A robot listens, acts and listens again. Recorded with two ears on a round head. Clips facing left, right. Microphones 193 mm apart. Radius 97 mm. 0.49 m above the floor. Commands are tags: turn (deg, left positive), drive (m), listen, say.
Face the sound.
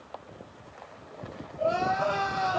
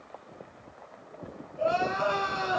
<turn deg="-90"/>
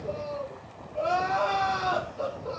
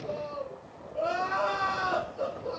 <say>Found it: crying, straight ahead, 2 to 4 m away.</say>